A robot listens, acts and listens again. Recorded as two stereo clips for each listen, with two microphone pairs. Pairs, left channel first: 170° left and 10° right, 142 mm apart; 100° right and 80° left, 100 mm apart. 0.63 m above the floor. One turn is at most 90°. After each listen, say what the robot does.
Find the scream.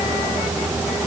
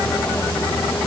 Keep listening.
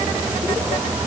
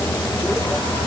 Keep listening.
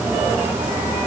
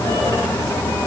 I can't make out a scream.